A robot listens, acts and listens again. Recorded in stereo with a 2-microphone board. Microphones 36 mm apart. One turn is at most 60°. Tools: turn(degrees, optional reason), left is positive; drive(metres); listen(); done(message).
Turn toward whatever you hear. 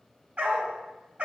turn(degrees=-40, reason="The dog barking: about 40° right or 140° right.")
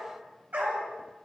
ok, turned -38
turn(degrees=-60, reason="So it is at 100° right.")
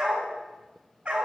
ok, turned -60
turn(degrees=-35, reason="The dog barking is now 35° right.")
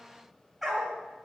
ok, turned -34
done("Facing the dog barking, 1 to 2 m away.")